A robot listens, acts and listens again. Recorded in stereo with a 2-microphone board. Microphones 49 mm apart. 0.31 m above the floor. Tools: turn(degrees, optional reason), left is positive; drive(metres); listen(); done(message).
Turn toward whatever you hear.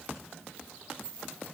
listen()
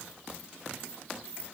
listen()
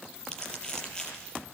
turn(degrees=20, reason="The crumpling: about 20° left or 160° left.")
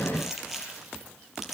done("Facing the crumpling, over 4 m away.")